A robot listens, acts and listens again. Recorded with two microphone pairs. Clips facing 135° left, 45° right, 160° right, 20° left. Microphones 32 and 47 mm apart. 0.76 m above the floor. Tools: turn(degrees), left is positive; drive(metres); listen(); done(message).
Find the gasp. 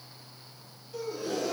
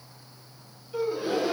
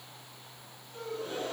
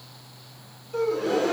turn(degrees=15)
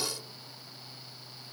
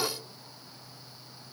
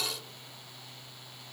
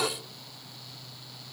done("Found it: a gasp, straight ahead.")